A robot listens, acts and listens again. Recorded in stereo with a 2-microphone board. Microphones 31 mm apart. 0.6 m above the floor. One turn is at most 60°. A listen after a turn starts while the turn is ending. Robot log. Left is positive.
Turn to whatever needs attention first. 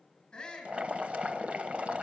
note: The shout: about 20° left or 160° left.
cmd yaw +20
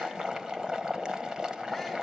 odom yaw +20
cmd idle
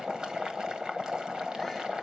cmd idle
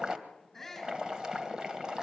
end: Facing the shout, over 4 m away.